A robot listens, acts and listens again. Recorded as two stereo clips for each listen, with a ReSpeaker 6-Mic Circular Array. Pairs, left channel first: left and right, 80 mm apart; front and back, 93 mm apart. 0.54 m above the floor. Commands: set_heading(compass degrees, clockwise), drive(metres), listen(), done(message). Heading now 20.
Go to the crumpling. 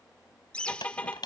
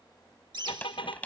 set_heading(305)
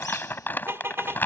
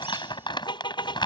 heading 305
set_heading(280)
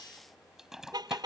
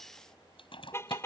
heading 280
drive(1.0)
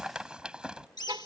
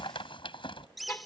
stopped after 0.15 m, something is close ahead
set_heading(290)
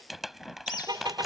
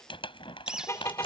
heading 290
done("Blocked. The crumpling is further on, straight ahead.")